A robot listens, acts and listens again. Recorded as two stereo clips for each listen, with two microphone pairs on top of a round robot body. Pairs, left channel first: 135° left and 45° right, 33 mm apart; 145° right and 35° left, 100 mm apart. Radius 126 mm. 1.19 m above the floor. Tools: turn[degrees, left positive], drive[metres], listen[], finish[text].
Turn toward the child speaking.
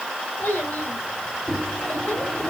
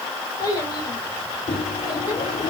Thought: The child speaking: 160° left.
Action: turn[160]
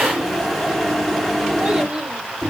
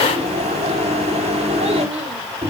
Action: listen[]
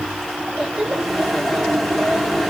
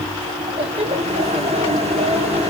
Thought: The child speaking is now 20° left.
Action: turn[20]
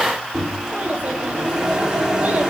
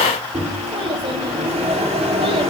Action: listen[]
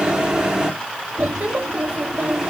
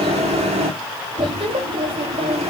Action: finish[Found it: a child speaking, straight ahead.]